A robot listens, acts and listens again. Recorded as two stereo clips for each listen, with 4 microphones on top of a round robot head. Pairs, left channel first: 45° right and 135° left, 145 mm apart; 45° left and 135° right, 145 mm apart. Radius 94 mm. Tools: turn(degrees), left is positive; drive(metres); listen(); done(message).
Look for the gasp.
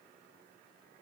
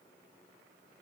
listen()
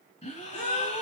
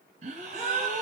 turn(degrees=-85)
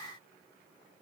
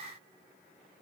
done("I heard a gasp from this way, but can't make it out now.")